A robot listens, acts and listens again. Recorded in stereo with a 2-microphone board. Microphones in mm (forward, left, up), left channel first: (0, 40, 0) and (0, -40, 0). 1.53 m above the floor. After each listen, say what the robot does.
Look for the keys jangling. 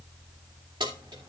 Turn 75° right.
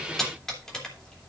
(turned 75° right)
Turn 10° left.
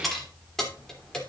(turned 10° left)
Turn 10° left.
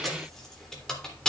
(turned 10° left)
Turn 10° left.
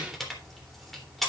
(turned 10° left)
Found it: keys jangling, straight ahead, 2 to 4 m away.